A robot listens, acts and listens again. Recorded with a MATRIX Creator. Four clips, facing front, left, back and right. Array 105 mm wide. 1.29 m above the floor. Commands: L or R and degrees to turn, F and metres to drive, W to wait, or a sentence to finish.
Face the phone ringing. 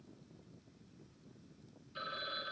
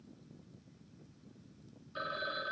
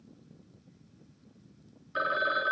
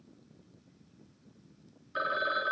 R150
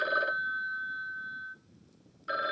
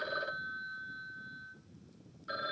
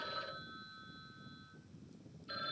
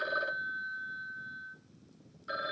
R10
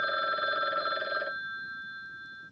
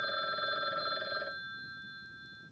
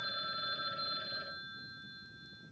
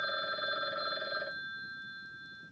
Facing the phone ringing, under 1 m away.